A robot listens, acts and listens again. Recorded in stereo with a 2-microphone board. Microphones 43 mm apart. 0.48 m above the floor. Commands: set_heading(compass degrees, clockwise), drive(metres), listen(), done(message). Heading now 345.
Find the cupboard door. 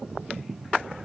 listen()
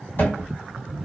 set_heading(295)
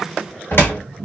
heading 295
set_heading(225)
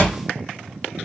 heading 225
set_heading(215)
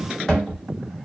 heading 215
done("Facing the cupboard door, 1 to 2 m away.")